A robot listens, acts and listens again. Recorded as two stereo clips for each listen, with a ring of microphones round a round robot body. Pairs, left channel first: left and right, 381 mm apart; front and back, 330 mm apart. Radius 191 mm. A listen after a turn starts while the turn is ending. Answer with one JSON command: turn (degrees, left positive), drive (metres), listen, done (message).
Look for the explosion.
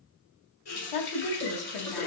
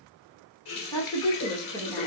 {"listen": true}
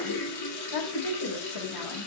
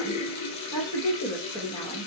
{"listen": true}
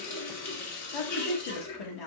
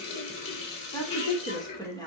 {"done": "I can't make out an explosion, only a running tap and a woman speaking."}